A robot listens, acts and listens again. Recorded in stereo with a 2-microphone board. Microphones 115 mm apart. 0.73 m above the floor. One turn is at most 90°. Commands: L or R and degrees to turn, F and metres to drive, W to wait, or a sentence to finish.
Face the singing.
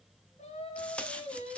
L90
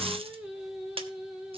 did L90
R10
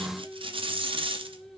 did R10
Found it: singing, straight ahead.